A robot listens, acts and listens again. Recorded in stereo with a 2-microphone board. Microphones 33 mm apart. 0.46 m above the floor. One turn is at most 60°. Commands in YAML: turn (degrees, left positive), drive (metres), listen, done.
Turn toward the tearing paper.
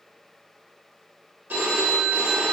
listen: true
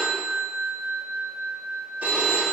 listen: true
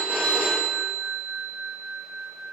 done: "I can't make out tearing paper, only a phone ringing."